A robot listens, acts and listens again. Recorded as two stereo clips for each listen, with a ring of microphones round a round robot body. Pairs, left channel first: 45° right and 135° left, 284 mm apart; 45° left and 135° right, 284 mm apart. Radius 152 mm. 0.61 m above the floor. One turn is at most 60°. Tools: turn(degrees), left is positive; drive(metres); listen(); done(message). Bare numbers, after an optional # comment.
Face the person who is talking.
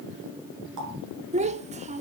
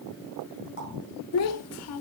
# The child speaking: 70° left.
turn(60)
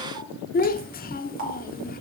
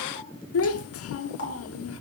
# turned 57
# The child speaking is now 10° left.
turn(10)
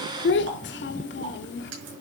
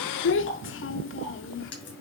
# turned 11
done("Facing the child speaking, 1 to 2 m away.")